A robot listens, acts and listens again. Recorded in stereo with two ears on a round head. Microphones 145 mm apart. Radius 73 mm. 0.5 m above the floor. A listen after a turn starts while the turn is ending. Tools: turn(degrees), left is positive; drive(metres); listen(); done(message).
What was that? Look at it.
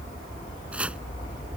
turn(degrees=-30)
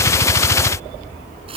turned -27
turn(degrees=-145)
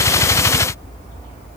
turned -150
listen()
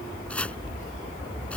turn(degrees=10)
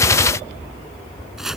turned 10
done("Facing the chopping.")